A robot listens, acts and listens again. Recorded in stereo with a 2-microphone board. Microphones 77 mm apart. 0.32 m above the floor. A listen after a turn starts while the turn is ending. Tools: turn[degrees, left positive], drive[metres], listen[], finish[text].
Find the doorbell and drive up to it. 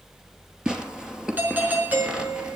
Thought: The doorbell: about 25° right or 155° right.
Action: turn[-25]
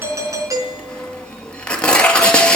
Thought: So it is at 130° right.
Action: turn[-130]
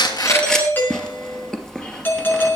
Thought: The doorbell is now 25° left.
Action: turn[25]
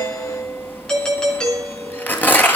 Thought: The doorbell is now 10° left.
Action: turn[10]
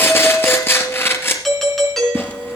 Action: drive[1.0]
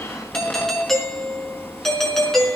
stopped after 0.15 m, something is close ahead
Action: finish[Blocked. The doorbell is further on, straight ahead.]